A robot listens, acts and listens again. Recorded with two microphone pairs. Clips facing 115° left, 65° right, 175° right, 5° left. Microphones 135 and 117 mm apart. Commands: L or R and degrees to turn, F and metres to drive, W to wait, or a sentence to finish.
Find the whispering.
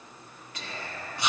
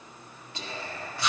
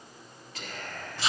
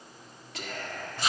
R10
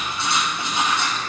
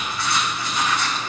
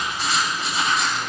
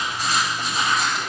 W
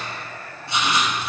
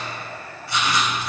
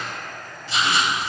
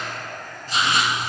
Facing the whispering.